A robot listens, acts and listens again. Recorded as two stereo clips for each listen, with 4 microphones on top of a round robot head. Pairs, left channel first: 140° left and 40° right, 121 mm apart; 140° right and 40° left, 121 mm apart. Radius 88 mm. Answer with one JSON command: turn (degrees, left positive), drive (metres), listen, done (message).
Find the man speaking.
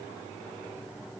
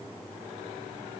{"listen": true}
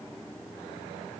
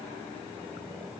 {"listen": true}
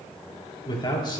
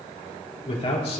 {"turn": -170}
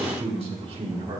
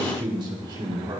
{"done": "Facing the man speaking, 2 to 4 m away."}